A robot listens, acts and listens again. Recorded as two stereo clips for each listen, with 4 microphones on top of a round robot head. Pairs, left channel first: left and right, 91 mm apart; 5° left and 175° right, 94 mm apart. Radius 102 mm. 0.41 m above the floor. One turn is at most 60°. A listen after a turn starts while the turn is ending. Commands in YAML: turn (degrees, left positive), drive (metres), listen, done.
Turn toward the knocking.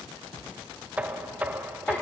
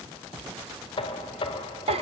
turn: -15
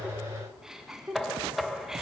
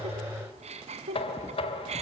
done: "Found it: knocking, straight ahead."